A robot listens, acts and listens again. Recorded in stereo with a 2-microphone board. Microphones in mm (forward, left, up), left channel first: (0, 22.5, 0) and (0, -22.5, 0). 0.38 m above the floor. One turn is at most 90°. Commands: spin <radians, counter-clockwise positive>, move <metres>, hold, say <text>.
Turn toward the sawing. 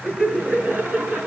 hold
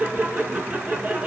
hold
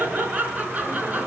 say I can't make out sawing to turn to.